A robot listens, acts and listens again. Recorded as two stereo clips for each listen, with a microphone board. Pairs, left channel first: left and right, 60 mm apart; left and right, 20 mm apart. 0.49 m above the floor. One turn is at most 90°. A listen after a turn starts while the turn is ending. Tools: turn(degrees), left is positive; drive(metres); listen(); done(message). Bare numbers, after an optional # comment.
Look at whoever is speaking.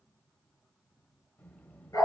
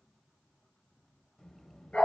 # The child speaking: about 25° left or 155° left.
turn(25)
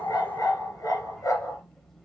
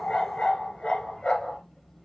done("Facing the child speaking.")